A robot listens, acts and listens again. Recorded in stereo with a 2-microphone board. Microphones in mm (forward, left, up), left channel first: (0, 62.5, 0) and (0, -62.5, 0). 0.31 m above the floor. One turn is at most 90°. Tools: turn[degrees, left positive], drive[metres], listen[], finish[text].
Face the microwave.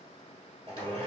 Action: listen[]
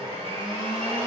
Action: listen[]
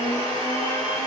Action: finish[I can't make out a microwave to turn to.]